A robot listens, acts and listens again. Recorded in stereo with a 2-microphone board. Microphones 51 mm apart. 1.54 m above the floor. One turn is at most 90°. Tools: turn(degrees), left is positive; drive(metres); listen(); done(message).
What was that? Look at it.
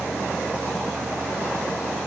listen()
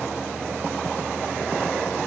listen()
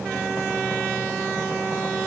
done("I can't make out anything to turn to.")